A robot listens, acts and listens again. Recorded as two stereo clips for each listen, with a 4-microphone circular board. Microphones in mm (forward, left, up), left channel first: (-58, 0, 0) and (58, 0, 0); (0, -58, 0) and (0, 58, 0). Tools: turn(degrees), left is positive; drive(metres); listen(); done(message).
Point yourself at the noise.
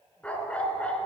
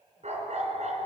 turn(degrees=100)
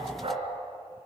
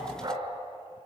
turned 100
turn(degrees=35)
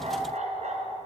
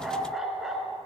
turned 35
done("Facing the dog barking.")